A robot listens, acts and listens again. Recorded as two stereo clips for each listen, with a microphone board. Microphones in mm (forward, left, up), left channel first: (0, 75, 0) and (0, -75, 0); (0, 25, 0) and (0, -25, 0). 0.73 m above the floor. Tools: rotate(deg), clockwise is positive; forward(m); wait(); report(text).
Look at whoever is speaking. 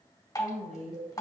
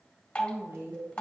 rotate(50)
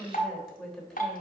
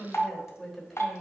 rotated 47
report("Facing the woman speaking, 2 to 4 m away.")